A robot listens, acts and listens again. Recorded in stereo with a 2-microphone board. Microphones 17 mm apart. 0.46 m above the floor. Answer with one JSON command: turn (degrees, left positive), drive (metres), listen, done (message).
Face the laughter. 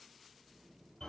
{"listen": true}
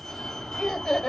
{"turn": 60}
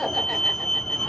{"listen": true}
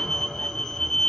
{"listen": true}
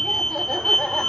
{"done": "I heard laughter, but can't make it out now. It was about straight ahead or 60° left."}